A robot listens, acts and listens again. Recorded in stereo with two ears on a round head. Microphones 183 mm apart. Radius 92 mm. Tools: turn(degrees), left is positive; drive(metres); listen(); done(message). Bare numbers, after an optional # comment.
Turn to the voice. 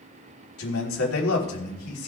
turn(90)
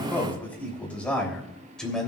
done("Facing the man speaking.")